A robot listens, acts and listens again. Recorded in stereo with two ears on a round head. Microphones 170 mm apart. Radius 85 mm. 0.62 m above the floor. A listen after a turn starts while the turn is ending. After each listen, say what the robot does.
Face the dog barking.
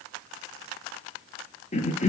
Keep listening.
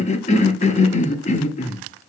Keep listening.
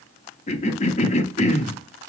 I can't make out a dog barking to turn to.